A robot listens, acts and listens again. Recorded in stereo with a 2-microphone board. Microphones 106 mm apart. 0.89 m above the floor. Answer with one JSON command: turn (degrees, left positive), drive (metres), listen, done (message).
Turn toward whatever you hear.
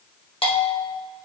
{"turn": 60}
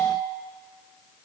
{"turn": 55}
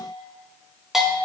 {"done": "Found it: a bell, straight ahead."}